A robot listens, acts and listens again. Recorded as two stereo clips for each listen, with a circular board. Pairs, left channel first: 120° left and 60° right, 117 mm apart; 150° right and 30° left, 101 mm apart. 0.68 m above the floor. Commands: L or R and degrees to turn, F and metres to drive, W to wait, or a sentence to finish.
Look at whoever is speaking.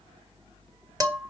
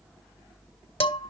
W
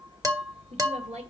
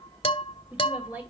R40
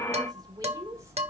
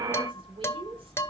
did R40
Found it: a woman speaking, straight ahead, 2 to 4 m away.